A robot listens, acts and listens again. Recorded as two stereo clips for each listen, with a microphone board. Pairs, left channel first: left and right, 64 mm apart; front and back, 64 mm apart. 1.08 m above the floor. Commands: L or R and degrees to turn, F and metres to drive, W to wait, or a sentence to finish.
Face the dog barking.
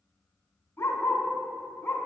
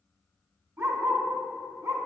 L150
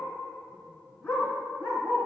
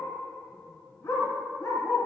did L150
L35
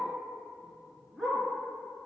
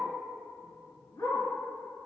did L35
Facing the dog barking, 2 to 4 m away.